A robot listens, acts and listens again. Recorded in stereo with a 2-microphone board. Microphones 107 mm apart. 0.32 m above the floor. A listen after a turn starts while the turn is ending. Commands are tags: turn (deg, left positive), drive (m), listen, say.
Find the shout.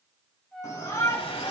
<turn deg="30"/>
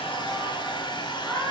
<say>Found it: a shout, straight ahead.</say>